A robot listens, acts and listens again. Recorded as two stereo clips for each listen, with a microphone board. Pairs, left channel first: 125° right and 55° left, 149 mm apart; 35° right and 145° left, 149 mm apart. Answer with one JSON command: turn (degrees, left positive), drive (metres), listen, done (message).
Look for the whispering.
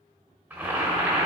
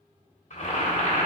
{"listen": true}
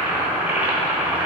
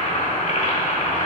{"listen": true}
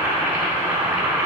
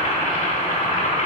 {"done": "I can't make out whispering, only boiling."}